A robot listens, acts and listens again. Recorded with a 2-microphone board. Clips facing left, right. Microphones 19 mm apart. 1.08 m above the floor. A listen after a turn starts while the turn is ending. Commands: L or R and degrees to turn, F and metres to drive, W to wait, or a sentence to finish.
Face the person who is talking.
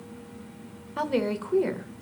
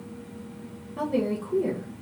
L50
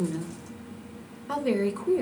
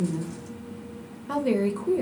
Facing the woman speaking, under 1 m away.